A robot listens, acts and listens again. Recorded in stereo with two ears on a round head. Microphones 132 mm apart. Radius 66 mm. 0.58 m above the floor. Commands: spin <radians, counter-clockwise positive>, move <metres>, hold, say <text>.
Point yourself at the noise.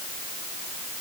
hold
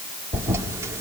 spin -0.35
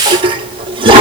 spin -2.36
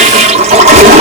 spin -0.96
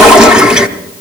say Found it: a toilet flushing, straight ahead, under 1 m away.